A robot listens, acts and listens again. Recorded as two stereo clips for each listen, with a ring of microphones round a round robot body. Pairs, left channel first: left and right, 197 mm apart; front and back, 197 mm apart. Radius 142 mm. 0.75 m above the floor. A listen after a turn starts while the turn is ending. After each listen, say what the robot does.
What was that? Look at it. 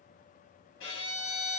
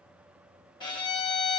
Turn 70° left.
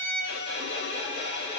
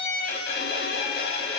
Turn 20° left.
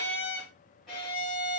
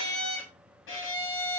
Facing the violin.